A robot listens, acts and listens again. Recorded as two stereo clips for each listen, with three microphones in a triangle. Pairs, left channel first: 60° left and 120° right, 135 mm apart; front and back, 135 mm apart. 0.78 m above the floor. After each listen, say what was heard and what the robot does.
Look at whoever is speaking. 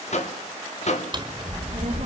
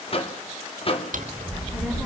The child speaking: 85° right. Turn 85° right.
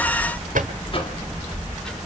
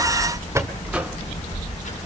The child speaking is now 25° right. Turn 25° right.
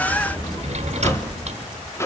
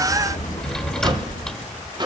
Facing the child speaking.